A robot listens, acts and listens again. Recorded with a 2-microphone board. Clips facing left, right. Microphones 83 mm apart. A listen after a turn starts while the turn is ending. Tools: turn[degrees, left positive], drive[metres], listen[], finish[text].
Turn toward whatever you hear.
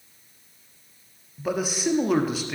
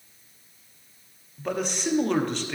Action: turn[30]
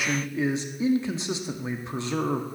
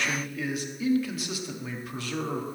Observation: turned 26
Thought: So it is at 145° left.
Action: turn[145]
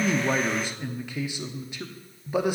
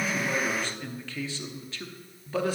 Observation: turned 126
Thought: The man speaking is now 20° left.
Action: turn[20]
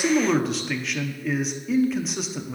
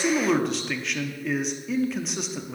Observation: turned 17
Action: finish[Facing the man speaking, under 1 m away.]